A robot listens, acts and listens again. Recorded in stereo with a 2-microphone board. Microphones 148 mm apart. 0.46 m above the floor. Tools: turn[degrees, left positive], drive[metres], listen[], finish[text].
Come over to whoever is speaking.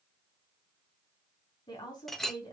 Thought: The woman speaking: about 30° left or 150° left.
Action: turn[30]
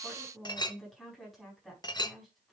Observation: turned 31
Action: drive[1.0]
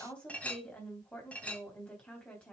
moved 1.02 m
Action: drive[1.0]
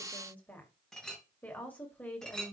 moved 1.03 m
Thought: The woman speaking is now 10° left.
Action: turn[10]
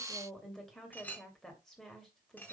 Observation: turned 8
Action: drive[1.0]
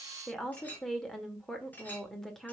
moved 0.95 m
Action: drive[1.0]
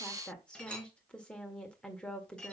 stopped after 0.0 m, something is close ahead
Thought: The woman speaking is now 10° left.
Action: turn[10]
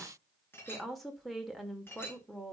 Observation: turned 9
Action: finish[Arrived at the woman speaking, straight ahead.]